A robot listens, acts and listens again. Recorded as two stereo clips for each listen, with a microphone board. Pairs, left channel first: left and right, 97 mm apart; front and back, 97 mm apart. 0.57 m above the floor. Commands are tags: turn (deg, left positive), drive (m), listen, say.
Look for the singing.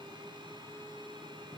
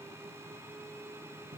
<listen/>
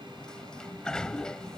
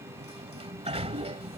<listen/>
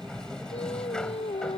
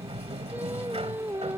<turn deg="110"/>
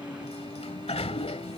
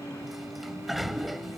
<listen/>
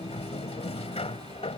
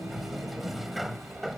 <listen/>
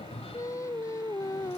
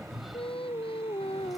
<turn deg="30"/>
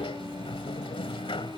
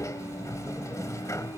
<listen/>
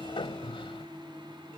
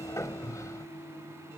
<listen/>
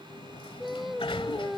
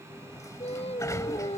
<say>Facing the singing.</say>